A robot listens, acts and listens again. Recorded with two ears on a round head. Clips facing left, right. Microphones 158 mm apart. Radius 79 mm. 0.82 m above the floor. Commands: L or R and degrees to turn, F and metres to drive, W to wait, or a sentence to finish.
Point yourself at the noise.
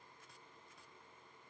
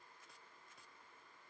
W
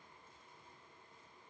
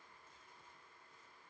W
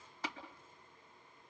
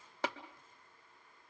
R55
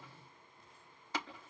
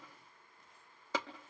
R70
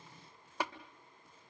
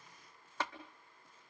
L10
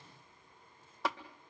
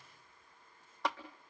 Found it: tapping, straight ahead.